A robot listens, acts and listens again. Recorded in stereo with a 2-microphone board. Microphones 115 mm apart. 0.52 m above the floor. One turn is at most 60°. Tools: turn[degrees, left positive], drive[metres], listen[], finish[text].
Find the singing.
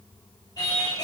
Thought: The singing: about 35° left or 145° left.
Action: turn[35]
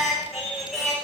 Action: finish[Facing the singing.]